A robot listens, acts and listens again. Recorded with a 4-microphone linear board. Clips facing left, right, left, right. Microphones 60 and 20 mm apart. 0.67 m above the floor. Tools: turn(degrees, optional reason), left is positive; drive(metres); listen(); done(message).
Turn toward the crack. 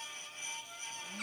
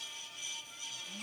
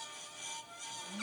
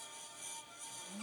listen()
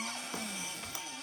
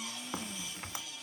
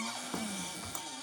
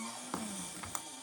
turn(degrees=-25, reason="The crack: about 25° right or 155° right.")
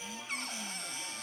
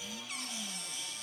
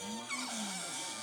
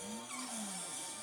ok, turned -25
listen()
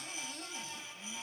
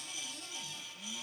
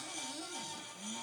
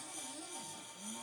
done("I heard a crack, but can't make it out now. It was about straight ahead or 130° right.")